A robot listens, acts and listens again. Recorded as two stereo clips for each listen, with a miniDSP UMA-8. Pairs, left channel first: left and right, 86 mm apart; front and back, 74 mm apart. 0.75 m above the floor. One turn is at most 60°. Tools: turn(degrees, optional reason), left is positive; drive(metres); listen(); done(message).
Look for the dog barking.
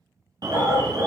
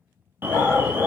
turn(degrees=-45, reason="The dog barking: 45° right.")
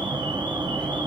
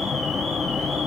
listen()
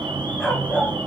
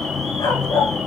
done("Found it: a dog barking, straight ahead, 1 to 2 m away.")